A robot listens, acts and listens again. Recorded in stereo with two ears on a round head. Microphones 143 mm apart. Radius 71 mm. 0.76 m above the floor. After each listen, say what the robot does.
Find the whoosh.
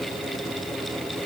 Keep listening.
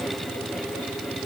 Keep listening.
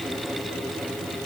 I can't make out a whoosh to turn to.